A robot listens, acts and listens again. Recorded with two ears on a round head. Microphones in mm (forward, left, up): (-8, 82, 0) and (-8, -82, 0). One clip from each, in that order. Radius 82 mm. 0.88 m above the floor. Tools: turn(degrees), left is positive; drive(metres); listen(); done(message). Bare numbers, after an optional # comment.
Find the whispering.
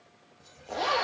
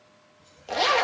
# The whispering: about 60° left or 120° left.
turn(60)
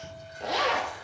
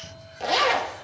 # So it is at 60° left.
turn(60)
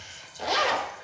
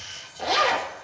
# The whispering is now 25° left.
turn(25)
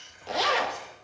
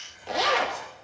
# The whispering is now 10° left.
turn(10)
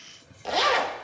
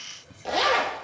done("Found it: whispering, straight ahead, over 4 m away.")